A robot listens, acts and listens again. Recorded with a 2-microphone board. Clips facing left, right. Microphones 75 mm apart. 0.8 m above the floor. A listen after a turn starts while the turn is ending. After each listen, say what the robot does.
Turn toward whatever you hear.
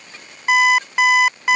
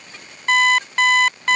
Turn 30° left.
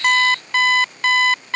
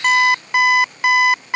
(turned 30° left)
Turn 20° right.
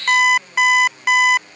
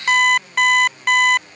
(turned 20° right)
Found it: an alarm clock, straight ahead.